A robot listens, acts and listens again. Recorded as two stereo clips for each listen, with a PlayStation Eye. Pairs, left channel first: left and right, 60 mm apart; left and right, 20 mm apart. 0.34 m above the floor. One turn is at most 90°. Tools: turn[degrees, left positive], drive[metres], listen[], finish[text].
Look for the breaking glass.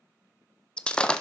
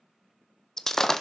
Thought: The breaking glass: about 20° left or 160° left.
Action: turn[20]
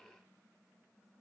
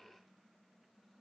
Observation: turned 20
Action: listen[]
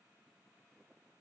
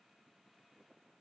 Action: finish[I heard breaking glass, but can't make it out now. It was about straight ahead or 140° left.]